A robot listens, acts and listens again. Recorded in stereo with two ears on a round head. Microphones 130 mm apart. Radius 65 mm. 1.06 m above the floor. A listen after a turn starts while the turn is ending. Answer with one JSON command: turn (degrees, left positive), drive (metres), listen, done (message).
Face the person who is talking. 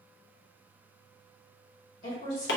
{"turn": 55}
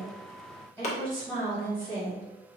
{"turn": 10}
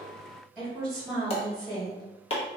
{"done": "Found it: a woman speaking, straight ahead, 1 to 2 m away."}